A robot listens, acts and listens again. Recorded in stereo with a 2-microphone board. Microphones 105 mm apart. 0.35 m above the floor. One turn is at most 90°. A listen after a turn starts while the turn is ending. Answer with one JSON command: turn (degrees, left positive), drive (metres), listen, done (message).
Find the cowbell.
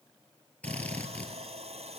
{"listen": true}
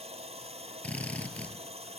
{"listen": true}
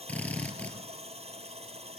{"done": "I can't make out a cowbell to turn to."}